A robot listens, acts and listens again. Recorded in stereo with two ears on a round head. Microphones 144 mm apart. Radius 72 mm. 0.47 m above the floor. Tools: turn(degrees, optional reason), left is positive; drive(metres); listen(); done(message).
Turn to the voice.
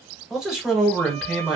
turn(degrees=-30)
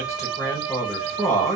turn(degrees=25, reason="So it is at 25° left.")
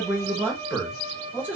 turn(degrees=-15, reason="The man speaking is now 15° right.")
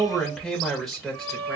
done("Facing the man speaking, 1 to 2 m away.")